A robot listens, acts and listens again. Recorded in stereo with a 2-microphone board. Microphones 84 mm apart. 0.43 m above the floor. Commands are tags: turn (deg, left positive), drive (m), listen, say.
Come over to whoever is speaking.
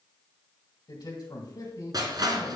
<turn deg="55"/>
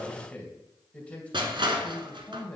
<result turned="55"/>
<turn deg="20"/>
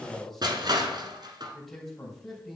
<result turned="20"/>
<drive m="1.0"/>
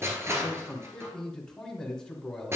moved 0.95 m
<turn deg="15"/>
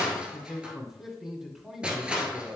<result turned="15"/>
<drive m="1.0"/>
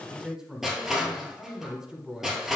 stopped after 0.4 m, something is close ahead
<turn deg="-15"/>
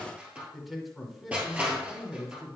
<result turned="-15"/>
<say>Arrived at the man speaking, straight ahead.</say>